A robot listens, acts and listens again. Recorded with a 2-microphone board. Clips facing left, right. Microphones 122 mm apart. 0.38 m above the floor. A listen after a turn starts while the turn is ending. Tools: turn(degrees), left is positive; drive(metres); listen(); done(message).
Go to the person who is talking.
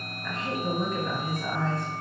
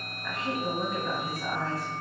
turn(degrees=-30)
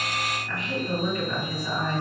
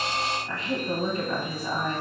turn(degrees=-145)
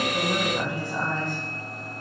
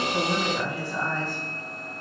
turn(degrees=20)
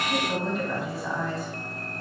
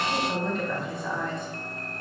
drive(metres=1.0)
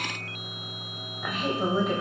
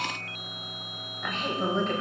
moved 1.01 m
turn(degrees=10)
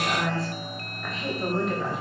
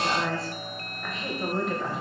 drive(metres=1.0)
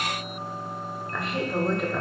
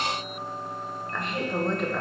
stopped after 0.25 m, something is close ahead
done("Arrived at the woman speaking, straight ahead.")